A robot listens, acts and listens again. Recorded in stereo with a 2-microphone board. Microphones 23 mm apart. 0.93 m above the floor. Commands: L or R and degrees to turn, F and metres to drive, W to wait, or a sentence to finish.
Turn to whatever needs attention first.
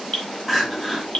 R30
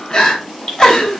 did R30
L30
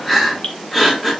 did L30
Facing the crying.